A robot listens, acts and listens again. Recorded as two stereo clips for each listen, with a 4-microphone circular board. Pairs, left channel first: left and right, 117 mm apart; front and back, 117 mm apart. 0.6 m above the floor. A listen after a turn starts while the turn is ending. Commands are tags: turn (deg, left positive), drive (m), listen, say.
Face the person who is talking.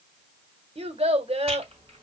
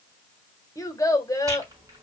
<turn deg="-60"/>
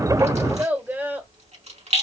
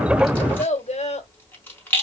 <turn deg="-15"/>
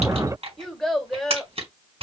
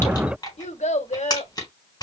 <say>Facing the child speaking.</say>